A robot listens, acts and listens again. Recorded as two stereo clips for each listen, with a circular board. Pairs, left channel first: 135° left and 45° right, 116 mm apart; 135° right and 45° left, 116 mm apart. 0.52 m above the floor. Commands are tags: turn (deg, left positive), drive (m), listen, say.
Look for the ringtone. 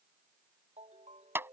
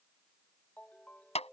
<turn deg="-60"/>
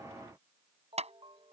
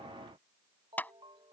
<say>Found it: a ringtone, straight ahead.</say>